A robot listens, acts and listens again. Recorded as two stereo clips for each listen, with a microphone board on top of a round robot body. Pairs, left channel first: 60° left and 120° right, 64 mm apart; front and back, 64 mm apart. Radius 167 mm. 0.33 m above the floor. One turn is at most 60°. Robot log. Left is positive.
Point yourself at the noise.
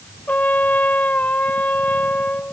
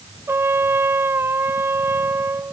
note: The trumpet: 125° left.
cmd yaw +60
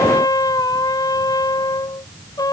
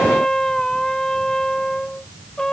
note: The trumpet is now 85° left.
cmd yaw +60
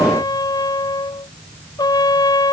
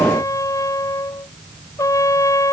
note: The trumpet is now 40° left.
cmd yaw +40
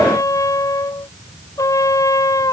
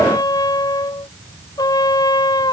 note: The trumpet is now 20° left.
cmd yaw +20
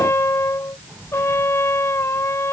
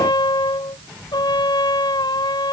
end: Facing the trumpet.